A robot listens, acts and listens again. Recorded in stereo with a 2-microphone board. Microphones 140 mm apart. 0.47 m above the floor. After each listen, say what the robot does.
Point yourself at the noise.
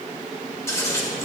Turn 20° left.
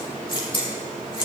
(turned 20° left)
Turn 135° left.
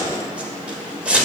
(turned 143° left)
Turn 10° right.
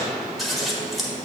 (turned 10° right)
Facing the scissors.